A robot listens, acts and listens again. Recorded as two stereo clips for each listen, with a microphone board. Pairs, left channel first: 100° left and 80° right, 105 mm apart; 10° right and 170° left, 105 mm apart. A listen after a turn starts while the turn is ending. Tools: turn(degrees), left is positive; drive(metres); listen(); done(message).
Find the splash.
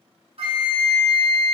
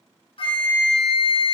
listen()
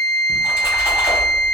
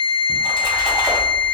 turn(degrees=-135)
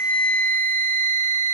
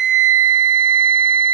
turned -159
turn(degrees=20)
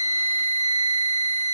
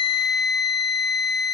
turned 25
done("Facing where the splash came from. I can't hear it now.")